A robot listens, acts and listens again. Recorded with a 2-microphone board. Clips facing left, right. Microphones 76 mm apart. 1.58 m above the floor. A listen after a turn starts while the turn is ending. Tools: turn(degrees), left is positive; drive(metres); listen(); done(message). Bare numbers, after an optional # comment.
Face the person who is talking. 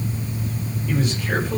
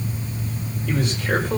turn(-90)
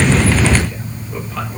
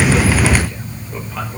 listen()
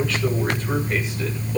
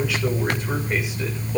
# The man speaking is now 15° right.
turn(-15)
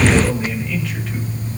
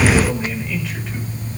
done("Facing the man speaking, over 4 m away.")